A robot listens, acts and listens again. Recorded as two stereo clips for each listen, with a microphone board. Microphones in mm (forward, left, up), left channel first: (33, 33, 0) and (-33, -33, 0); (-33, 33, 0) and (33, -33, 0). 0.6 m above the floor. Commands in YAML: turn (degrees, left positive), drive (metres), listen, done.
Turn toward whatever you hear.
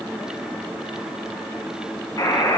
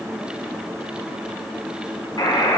turn: 95
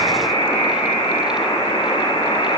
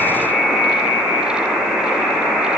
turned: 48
turn: 45
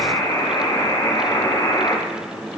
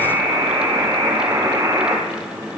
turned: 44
done: "Found it: a buzzer, straight ahead, 2 to 4 m away."